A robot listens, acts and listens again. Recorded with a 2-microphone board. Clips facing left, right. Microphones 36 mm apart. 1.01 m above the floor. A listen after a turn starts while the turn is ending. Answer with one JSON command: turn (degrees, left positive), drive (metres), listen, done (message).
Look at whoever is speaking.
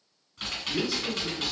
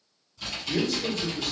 {"turn": -90}
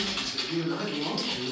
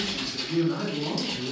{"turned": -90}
{"turn": 25}
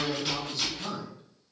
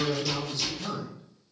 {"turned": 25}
{"turn": 20}
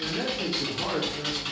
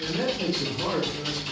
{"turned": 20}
{"turn": 30}
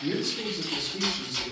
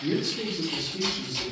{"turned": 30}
{"turn": 15}
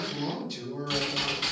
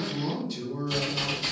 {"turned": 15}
{"done": "Facing the man speaking."}